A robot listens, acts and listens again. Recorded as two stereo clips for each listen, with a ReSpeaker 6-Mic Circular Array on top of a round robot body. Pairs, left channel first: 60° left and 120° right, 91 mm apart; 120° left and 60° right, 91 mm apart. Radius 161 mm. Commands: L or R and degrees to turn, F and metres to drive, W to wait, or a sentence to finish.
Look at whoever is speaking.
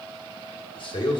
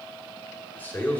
L50
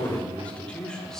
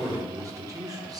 R25
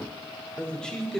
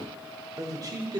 R25
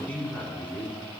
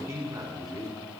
R15
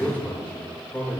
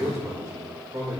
R10
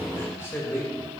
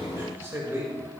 Found it: a man speaking, straight ahead, 2 to 4 m away.